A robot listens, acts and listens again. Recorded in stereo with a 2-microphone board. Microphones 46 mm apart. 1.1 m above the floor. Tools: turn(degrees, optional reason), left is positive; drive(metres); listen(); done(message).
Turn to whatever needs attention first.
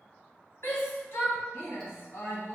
turn(degrees=65, reason="The shout: about 65° left or 115° left.")
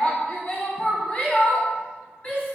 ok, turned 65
turn(degrees=40, reason="So it is at 40° left.")
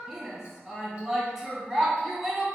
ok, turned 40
done("Found it: a shout, straight ahead, 1 to 2 m away.")